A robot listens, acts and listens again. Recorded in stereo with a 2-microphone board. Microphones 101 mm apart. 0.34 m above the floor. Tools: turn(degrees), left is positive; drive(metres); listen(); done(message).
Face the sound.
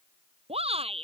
turn(degrees=-90)
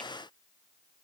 listen()
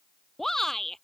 done("Found it: a shout, straight ahead.")